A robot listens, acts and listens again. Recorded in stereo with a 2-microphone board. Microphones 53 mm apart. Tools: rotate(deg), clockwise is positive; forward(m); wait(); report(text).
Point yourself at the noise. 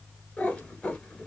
rotate(-25)
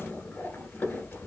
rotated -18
rotate(-140)
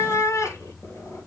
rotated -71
rotate(-65)
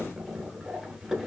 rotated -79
rotate(10)
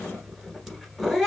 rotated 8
report("Found it: a cat meowing, straight ahead.")